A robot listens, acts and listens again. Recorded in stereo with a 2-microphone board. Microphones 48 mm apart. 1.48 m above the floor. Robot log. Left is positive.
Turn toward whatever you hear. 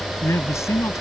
cmd yaw +90
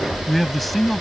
end: Facing the man speaking.